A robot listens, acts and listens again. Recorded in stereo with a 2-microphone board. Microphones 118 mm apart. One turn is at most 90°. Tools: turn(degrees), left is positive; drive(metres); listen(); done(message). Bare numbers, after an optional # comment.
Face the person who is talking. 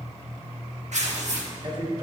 # The man speaking: about 40° right or 140° right.
turn(-40)
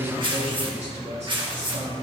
# So it is at 110° right.
turn(-90)
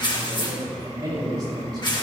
# The man speaking is now 35° right.
turn(-35)
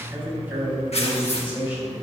# The man speaking is now 15° right.
turn(-15)
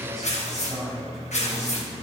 listen()
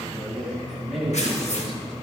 done("Found it: a man speaking, straight ahead, over 4 m away.")